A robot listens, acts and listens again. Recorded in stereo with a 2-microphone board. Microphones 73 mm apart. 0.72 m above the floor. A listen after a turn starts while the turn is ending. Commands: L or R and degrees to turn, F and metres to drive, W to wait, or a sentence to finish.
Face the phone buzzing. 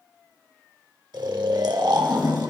W
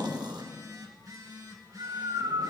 R65
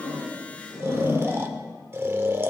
W
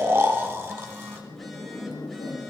W
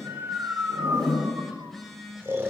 Found it: a phone buzzing, straight ahead.